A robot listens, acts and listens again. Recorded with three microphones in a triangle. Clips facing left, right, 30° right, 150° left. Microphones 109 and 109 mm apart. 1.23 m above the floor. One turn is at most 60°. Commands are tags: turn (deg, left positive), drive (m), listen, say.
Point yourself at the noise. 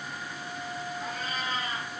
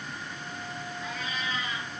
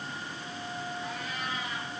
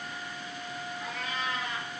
<turn deg="60"/>
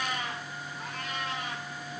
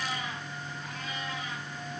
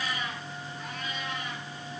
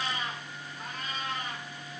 <turn deg="60"/>
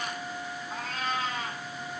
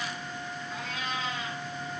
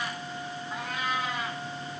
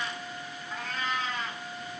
<turn deg="50"/>
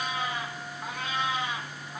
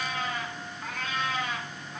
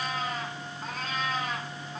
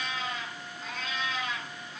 <turn deg="15"/>
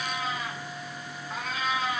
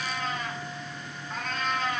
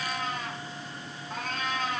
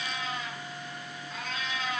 <say>Found it: a cat meowing, straight ahead, 2 to 4 m away.</say>